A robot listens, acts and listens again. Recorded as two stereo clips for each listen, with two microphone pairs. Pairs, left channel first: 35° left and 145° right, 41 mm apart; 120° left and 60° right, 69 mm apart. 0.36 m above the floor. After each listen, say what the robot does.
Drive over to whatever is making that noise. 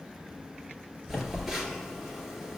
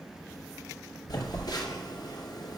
Turn 135° left.
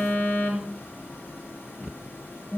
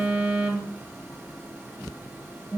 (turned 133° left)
Drive 1.0 m forward.
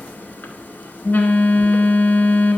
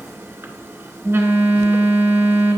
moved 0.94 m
Drive 1.0 m forward.
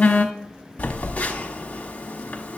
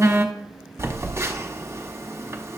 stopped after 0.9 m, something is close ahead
Turn 15° right.
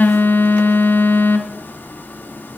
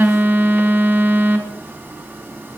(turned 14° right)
I am next to the phone buzzing.